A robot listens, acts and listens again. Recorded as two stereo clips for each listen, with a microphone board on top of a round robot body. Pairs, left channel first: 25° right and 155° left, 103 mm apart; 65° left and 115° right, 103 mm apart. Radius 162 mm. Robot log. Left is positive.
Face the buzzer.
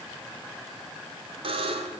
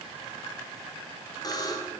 note: The buzzer: 120° left.
cmd yaw +120
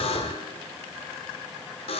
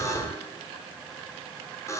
end: Facing the buzzer, 1 to 2 m away.